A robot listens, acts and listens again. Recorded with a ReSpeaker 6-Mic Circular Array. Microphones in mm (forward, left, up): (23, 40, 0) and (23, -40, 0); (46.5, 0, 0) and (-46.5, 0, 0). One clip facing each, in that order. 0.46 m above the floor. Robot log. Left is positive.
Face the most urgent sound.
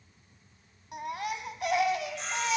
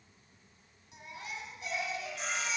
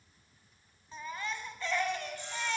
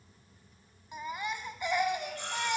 note: The baby crying: 105° left.
cmd yaw +105
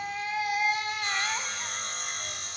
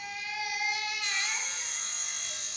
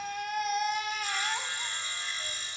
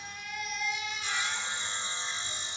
note: The baby crying is now 40° left.
cmd yaw +40
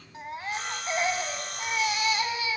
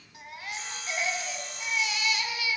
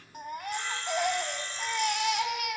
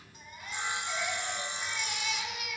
note: The baby crying is now 30° left.
cmd yaw +30
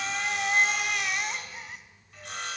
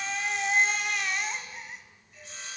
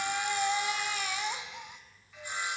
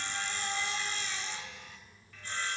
end: Found it: a baby crying, straight ahead, 1 to 2 m away.